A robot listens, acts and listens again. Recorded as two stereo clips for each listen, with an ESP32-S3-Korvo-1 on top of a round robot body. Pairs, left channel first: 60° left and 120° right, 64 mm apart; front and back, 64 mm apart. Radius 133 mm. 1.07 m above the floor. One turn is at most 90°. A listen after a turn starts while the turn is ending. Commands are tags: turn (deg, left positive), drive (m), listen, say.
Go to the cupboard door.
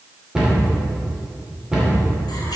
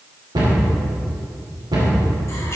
<turn deg="90"/>
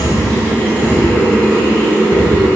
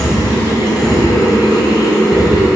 <turn deg="90"/>
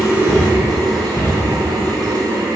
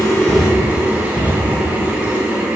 <drive m="1.0"/>
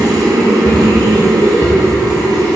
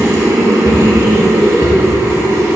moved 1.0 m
<listen/>
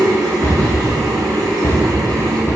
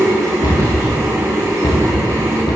<drive m="1.0"/>
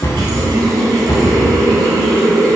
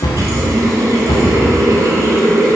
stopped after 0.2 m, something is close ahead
<say>I am next to the cupboard door.</say>